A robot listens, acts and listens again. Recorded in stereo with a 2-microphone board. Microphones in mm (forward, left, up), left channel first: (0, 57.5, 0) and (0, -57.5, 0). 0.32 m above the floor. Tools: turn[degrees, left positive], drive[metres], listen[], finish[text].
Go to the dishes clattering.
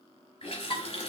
Thought: The dishes clattering: about 45° left or 135° left.
Action: turn[45]
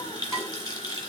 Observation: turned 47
Action: drive[1.0]
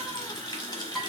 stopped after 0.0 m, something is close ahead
Action: finish[Something is in my way. I am facing the dishes clattering but have not reached it.]